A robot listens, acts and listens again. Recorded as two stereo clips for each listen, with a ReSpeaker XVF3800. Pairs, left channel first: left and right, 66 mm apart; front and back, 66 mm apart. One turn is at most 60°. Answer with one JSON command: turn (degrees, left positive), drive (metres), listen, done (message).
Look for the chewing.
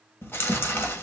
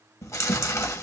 {"turn": 35}
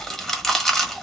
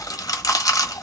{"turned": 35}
{"done": "Facing the chewing, 1 to 2 m away."}